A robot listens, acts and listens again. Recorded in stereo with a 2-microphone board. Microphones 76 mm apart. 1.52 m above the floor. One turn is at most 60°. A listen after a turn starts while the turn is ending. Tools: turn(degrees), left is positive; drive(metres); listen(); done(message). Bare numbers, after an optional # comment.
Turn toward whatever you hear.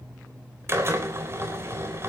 # The drill: about 35° right or 145° right.
turn(-35)
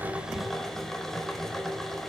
done("Found it: a drill, straight ahead.")